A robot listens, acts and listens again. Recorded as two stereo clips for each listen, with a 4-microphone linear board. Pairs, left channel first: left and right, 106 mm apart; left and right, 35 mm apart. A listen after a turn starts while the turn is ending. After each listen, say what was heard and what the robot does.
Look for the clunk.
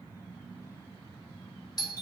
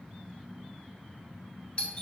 Keep listening.
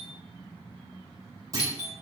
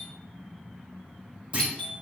The clunk: about 35° right or 145° right. Turn 35° right.
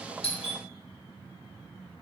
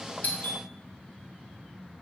Keep listening.
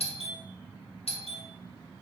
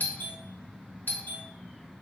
I heard a clunk, but can't make it out now. It was about straight ahead or 110° right.